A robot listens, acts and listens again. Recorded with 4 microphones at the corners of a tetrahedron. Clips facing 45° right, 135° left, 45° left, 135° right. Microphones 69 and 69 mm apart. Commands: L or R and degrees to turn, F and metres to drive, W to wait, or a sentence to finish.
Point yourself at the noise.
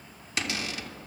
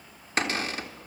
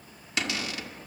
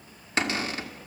L175
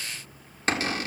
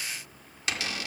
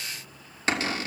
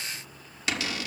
Found it: a cupboard door, straight ahead, 1 to 2 m away.